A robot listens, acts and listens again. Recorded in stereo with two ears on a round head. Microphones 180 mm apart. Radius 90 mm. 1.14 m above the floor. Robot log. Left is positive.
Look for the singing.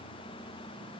cmd idle
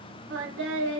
note: The singing: about 70° right or 110° right.
cmd yaw -70
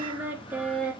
end: Facing the singing.